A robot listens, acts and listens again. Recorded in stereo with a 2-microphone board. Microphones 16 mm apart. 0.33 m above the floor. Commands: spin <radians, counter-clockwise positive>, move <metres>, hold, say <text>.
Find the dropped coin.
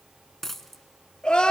spin 0.44
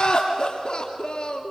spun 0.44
hold
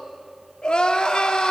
say I heard a dropped coin, but can't make it out now. It was about straight ahead or 130° left.